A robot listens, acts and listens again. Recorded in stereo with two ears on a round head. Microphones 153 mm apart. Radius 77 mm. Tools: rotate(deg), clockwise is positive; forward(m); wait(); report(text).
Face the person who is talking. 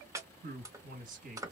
rotate(50)
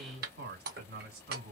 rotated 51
rotate(70)
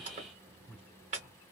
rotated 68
report("Found it: a man speaking, straight ahead, 1 to 2 m away.")